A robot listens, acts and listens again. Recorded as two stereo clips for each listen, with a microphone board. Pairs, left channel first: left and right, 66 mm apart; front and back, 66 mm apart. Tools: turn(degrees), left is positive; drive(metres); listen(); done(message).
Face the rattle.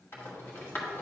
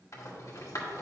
turn(degrees=35)
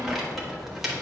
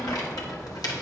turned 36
listen()
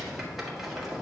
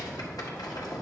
listen()
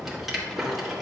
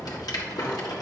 done("Found it: a rattle, straight ahead.")